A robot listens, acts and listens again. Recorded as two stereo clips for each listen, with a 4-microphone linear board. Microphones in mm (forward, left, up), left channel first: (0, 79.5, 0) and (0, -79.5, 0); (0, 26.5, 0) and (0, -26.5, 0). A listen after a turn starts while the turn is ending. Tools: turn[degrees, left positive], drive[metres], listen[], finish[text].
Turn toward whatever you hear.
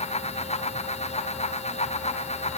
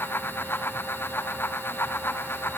Action: listen[]
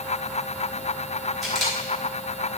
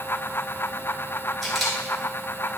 Action: turn[30]
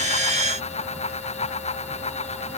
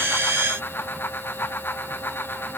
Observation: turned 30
Action: listen[]
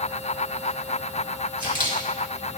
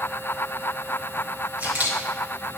Thought: So it is at 30° right.
Action: turn[-30]
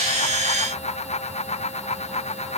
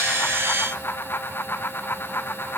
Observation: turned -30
Action: listen[]
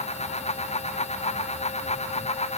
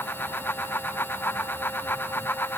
Action: listen[]
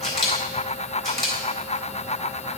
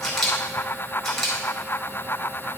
Action: finish[Facing the camera shutter, 2 to 4 m away.]